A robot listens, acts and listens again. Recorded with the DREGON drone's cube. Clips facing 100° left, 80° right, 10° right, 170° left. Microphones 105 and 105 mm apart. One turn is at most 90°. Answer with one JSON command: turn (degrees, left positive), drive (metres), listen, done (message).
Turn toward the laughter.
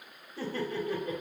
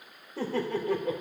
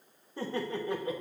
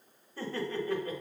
{"turn": -80}
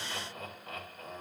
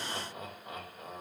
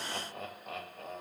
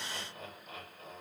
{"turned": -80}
{"done": "Facing the laughter, 2 to 4 m away."}